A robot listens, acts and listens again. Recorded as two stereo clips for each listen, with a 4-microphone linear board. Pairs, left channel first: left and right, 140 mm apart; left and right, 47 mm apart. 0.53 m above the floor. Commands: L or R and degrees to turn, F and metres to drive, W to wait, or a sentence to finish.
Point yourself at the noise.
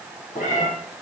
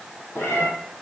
L65
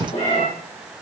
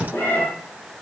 L50
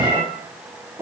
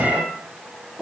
R20
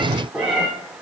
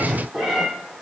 Facing the cat meowing.